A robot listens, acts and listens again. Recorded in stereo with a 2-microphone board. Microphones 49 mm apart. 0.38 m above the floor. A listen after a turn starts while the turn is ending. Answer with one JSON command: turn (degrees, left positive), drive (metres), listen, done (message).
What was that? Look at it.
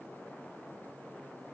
{"listen": true}
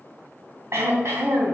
{"turn": -70}
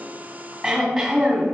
{"turn": -10}
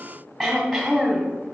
{"done": "Facing the throat clearing."}